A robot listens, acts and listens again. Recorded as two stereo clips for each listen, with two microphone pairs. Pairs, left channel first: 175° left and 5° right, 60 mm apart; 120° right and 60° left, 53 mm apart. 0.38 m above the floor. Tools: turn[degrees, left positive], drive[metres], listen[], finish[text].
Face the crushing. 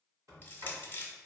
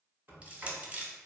Thought: The crushing: 125° left.
Action: turn[125]
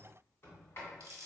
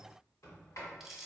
Thought: The crushing is now 25° right.
Action: turn[-25]
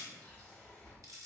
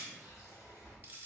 Action: finish[Found it: crushing, straight ahead.]